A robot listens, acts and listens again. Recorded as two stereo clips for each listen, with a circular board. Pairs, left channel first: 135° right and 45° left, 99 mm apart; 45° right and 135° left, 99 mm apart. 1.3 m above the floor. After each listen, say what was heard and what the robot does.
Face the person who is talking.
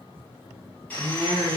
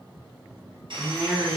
The woman speaking: 60° left. Turn 60° left.
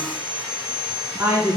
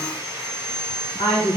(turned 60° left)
The woman speaking is now 20° right. Turn 20° right.
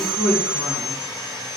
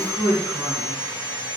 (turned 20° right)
Facing the woman speaking.